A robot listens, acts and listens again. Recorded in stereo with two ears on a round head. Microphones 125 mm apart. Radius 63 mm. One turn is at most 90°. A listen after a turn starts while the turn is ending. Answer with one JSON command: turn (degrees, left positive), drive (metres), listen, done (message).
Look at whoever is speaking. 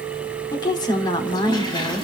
{"turn": 30}
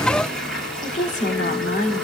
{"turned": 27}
{"turn": 90}
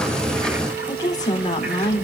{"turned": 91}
{"turn": 30}
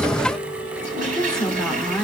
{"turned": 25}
{"done": "Found it: a woman speaking, straight ahead."}